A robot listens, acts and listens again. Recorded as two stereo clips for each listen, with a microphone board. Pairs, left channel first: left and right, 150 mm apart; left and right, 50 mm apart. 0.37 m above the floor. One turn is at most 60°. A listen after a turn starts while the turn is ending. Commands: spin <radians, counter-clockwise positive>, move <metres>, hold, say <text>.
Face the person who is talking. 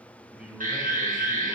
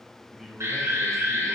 spin -0.52
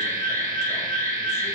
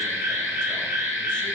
hold
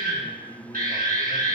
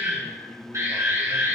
spin 0.44
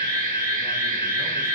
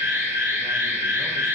hold
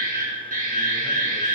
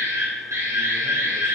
hold
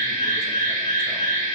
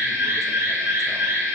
say I heard a man speaking from this way, but can't make it out now.